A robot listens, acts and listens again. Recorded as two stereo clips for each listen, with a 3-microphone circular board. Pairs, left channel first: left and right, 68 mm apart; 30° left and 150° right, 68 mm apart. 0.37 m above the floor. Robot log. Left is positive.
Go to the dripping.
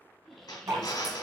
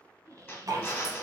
note: The dripping: 115° right.
cmd yaw -115
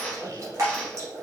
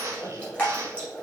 note: The dripping is now 45° right.
cmd yaw -45
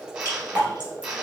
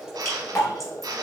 note: The dripping is now 15° right.
cmd yaw -15
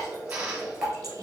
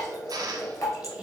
cmd fwd 1.0
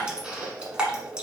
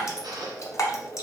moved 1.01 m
note: The dripping is now 15° right.
cmd yaw -15
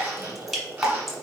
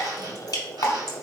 cmd fwd 1.0
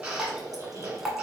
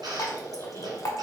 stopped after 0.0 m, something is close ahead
end: Arrived at the dripping, straight ahead.